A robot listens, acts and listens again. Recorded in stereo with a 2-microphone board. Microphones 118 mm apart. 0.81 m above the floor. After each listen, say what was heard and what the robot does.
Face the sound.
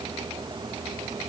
Keep listening.
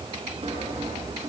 The sawing: about 55° right or 125° right. Turn 55° right.
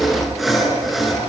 Facing the sawing, over 4 m away.